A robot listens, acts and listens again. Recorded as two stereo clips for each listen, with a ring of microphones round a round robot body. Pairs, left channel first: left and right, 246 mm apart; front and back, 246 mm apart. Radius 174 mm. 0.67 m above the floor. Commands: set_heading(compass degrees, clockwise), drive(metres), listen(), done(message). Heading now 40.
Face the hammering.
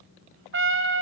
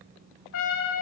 listen()
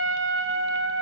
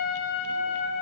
listen()
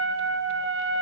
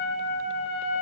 done("I can't make out hammering to turn to.")